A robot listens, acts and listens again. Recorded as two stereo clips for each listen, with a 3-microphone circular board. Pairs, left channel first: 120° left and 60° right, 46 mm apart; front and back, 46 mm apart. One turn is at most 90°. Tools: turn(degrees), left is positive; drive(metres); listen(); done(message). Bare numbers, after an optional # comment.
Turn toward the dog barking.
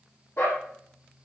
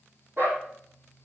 # The dog barking: 140° left.
turn(90)
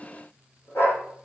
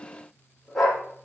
# The dog barking is now 85° left.
turn(85)
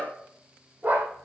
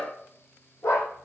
done("Found it: a dog barking, straight ahead.")